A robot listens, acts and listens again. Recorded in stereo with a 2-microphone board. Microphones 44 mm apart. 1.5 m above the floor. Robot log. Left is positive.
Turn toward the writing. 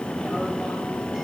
cmd idle
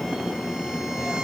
cmd idle
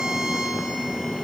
end: I can't make out writing.